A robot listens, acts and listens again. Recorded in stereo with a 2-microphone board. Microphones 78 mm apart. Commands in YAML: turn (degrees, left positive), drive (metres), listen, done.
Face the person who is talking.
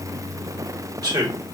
turn: -60
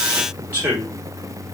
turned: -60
turn: -30
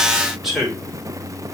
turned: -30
done: "Facing the man speaking."